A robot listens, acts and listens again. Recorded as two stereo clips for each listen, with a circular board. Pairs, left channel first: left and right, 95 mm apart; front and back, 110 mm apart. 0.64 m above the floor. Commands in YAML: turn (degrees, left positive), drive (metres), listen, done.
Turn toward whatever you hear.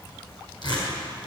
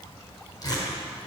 turn: 55
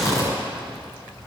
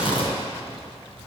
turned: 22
turn: 30
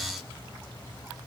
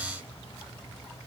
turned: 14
turn: 15
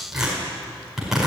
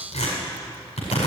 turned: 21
done: "Found it: tearing paper, straight ahead."